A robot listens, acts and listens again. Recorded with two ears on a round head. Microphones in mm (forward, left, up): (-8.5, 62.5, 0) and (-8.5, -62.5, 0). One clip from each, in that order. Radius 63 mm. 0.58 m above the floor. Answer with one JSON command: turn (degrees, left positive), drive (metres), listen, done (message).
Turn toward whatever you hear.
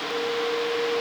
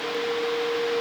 {"listen": true}
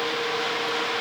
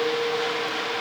{"listen": true}
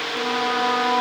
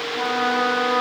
{"turn": -55}
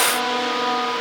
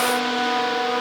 {"turn": -65}
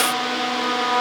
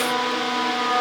{"done": "Found it: a trumpet, straight ahead, over 4 m away."}